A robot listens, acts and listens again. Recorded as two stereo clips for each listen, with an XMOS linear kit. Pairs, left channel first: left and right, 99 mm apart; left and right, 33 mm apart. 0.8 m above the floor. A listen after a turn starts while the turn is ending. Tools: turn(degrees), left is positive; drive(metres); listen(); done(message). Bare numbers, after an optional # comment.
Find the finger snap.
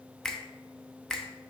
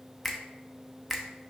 turn(30)
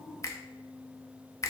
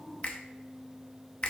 # So it is at 140° left.
turn(140)
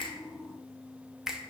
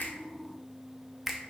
done("Facing the finger snap.")